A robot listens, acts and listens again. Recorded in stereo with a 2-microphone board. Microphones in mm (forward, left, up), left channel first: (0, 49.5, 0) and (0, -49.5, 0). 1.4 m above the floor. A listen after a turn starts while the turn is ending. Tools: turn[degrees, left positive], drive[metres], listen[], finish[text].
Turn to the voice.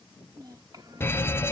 Thought: The child speaking: about 45° right or 135° right.
Action: turn[-45]
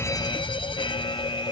Action: listen[]
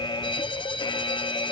Action: listen[]
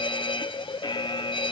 Action: finish[I heard a child speaking, but can't make it out now. It was about straight ahead or 90° right.]